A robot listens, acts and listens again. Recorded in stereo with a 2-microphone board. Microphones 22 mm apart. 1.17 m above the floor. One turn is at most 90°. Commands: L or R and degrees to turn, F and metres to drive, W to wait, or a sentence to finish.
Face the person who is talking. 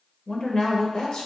L40
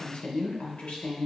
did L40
L90
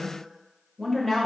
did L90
L10
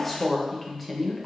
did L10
Found it: a woman speaking, straight ahead, under 1 m away.